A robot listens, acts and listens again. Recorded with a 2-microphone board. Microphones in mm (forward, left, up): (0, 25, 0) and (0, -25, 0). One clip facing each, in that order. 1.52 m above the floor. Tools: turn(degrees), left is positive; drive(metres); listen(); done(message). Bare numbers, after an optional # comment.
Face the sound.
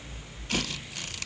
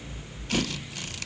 listen()
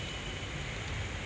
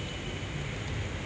listen()
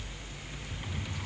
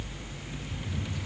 # The drawer: about 25° left or 155° left.
turn(25)
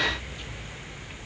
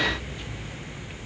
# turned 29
listen()
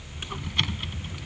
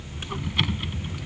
done("Found it: a drawer, straight ahead.")